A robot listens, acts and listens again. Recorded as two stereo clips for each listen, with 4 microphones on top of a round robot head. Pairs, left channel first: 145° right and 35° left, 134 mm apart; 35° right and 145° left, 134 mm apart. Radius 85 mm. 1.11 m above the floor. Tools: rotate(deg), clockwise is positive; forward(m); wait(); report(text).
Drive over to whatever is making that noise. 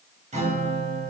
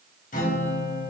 forward(1.0)
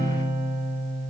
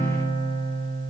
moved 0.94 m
forward(1.0)
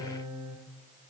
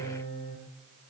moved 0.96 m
rotate(10)
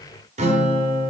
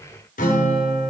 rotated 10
forward(1.0)
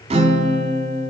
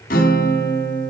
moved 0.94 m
rotate(10)
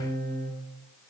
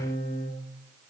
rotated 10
forward(1.0)
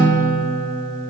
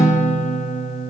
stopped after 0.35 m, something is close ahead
report("I am next to the guitar.")